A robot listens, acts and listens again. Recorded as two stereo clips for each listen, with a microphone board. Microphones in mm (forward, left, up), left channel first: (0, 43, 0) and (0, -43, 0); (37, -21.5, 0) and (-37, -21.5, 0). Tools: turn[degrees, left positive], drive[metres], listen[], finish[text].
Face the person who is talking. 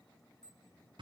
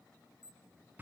Action: listen[]
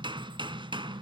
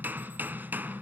Action: listen[]
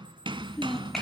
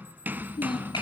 Action: finish[Facing the child speaking.]